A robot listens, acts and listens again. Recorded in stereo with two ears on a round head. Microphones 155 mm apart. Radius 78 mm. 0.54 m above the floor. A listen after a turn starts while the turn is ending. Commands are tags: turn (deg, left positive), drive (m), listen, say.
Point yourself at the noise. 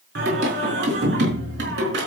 <turn deg="-70"/>
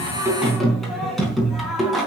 <say>Found it: singing, straight ahead, 2 to 4 m away.</say>